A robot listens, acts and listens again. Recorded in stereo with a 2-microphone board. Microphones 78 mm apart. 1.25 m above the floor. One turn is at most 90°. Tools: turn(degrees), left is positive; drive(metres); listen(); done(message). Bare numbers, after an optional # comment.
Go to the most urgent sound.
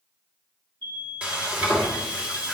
# The alarm: about 65° right or 115° right.
turn(-65)
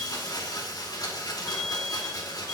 # So it is at 45° right.
turn(-45)
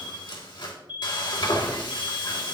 # The alarm is now 20° right.
turn(-20)
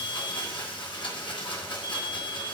drive(1.0)
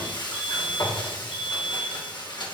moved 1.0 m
# The alarm is now 15° right.
turn(-15)
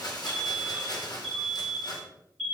drive(1.0)
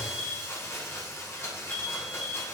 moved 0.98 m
drive(1.0)
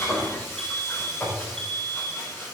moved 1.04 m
drive(1.0)
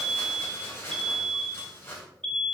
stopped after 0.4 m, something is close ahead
done("Arrived at the alarm, straight ahead.")